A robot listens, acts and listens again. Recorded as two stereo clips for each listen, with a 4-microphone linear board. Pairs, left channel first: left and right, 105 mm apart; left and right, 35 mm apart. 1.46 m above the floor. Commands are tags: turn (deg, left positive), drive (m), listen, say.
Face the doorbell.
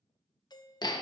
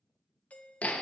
<turn deg="40"/>
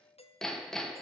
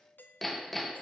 <turn deg="100"/>
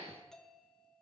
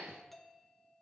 <say>Found it: a doorbell, straight ahead, 1 to 2 m away.</say>